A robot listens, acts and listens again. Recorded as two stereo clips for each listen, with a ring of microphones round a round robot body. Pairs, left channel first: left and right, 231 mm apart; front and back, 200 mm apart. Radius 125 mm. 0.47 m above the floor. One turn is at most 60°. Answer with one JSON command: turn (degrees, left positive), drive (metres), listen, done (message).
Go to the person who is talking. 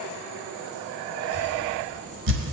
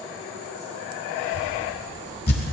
{"turn": -60}
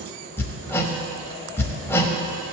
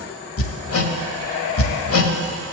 {"turn": -60}
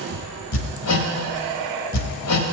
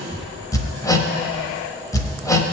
{"turn": -40}
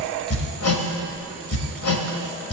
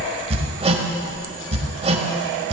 {"drive": 1.0}
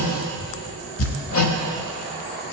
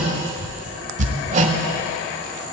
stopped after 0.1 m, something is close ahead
{"done": "Something is in my way. I am facing the child speaking but have not reached it."}